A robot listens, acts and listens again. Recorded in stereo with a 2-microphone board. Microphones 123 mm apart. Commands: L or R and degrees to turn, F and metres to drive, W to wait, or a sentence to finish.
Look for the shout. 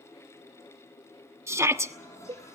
R25
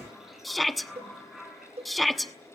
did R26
Found it: a shout, straight ahead, 1 to 2 m away.